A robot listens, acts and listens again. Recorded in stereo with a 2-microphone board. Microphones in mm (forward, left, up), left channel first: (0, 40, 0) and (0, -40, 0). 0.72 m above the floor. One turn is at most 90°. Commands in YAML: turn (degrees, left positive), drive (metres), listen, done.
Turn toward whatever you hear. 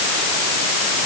listen: true
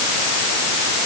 listen: true
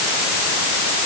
done: "I can't make out anything."